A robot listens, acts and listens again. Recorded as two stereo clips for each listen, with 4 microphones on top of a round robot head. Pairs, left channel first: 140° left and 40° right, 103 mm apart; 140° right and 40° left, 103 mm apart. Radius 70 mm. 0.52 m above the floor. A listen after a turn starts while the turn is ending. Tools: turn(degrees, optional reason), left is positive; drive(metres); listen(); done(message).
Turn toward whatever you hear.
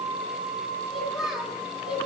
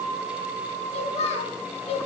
turn(degrees=-120, reason="The child speaking: 120° right.")
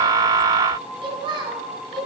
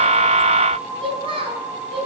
turn(degrees=10, reason="The child speaking is now 10° left.")
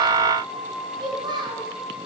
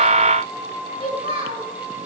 turn(degrees=10, reason="The child speaking is now 10° left.")
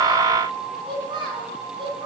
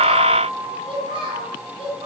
done("Facing the child speaking, 2 to 4 m away.")